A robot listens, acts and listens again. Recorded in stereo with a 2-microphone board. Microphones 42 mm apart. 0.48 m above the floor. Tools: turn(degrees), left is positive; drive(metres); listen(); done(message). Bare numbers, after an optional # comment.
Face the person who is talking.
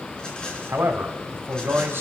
# The man speaking: about 65° right or 115° right.
turn(-65)
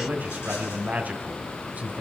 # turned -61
# So it is at 40° right.
turn(-40)
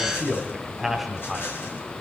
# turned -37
done("Found it: a man speaking, straight ahead.")